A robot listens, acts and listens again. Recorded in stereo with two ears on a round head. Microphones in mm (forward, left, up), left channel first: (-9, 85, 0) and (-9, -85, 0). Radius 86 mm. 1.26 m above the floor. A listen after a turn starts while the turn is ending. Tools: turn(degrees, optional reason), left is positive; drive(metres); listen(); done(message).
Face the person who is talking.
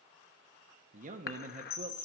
turn(degrees=-40, reason="The man speaking: about 40° right or 140° right.")
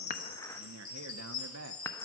turn(degrees=-100, reason="So it is at 100° right.")
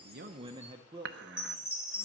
turn(degrees=-20, reason="The man speaking is now 20° right.")
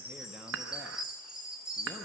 listen()
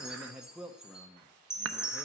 done("Facing the man speaking.")